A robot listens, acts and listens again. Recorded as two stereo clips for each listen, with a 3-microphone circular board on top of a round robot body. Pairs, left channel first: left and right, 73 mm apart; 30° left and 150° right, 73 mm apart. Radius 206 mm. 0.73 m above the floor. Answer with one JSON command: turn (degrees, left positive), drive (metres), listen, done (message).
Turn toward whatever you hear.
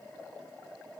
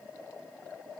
{"listen": true}
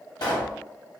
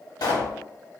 {"turn": 65}
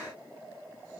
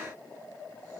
{"done": "Facing where the pop came from. I can't hear it now."}